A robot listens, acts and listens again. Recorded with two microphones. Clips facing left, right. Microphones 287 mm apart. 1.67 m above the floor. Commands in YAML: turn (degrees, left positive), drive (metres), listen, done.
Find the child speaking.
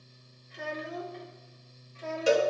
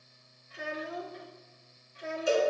turn: -20
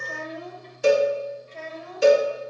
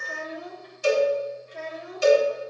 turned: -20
turn: -15
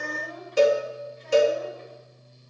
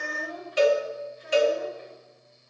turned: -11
turn: -30
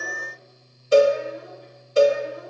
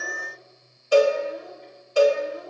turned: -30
turn: 15
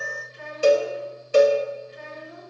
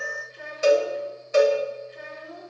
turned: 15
done: "Found it: a child speaking, straight ahead, 2 to 4 m away."